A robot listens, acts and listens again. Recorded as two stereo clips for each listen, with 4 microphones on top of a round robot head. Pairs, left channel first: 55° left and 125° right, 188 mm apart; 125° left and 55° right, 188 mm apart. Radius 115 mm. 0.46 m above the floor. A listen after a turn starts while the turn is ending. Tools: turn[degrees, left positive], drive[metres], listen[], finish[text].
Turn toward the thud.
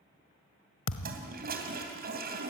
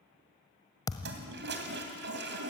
Thought: The thud: 50° left.
Action: turn[50]
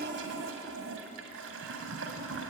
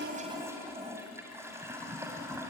Action: finish[I heard a thud from this way, but can't make it out now.]